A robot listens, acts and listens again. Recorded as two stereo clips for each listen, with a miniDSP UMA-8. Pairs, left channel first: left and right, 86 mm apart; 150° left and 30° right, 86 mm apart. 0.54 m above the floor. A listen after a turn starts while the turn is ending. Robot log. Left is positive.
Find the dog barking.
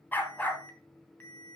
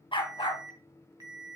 note: The dog barking: 160° left.
cmd yaw +160
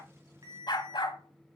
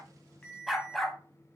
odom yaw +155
note: The dog barking is now 65° left.
cmd yaw +65
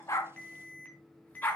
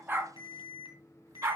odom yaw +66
note: The dog barking is now 20° left.
cmd yaw +20
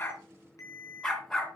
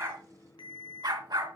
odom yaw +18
end: Facing the dog barking.